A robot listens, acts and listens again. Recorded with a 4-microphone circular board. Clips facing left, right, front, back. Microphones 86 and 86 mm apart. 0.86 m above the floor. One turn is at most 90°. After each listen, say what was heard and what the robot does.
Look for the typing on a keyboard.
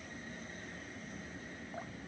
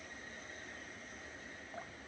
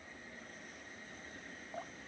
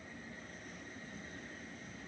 Keep listening.
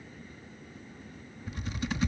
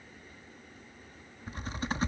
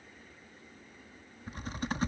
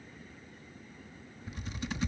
The typing on a keyboard: 40° right. Turn 40° right.
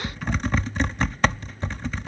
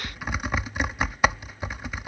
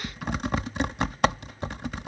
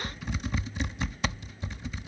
The typing on a keyboard is now 10° right. Turn 10° right.
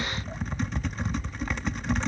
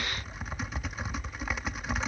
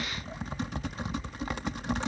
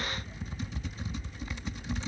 Facing the typing on a keyboard.